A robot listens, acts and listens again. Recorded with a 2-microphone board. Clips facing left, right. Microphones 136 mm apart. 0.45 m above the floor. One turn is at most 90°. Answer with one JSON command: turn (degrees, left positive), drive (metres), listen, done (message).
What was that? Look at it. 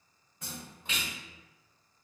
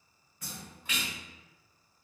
{"turn": 25}
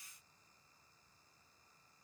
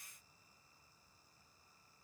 {"listen": true}
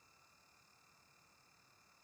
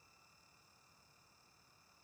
{"done": "I heard a splash, but can't make it out now. It was about straight ahead or 130° left."}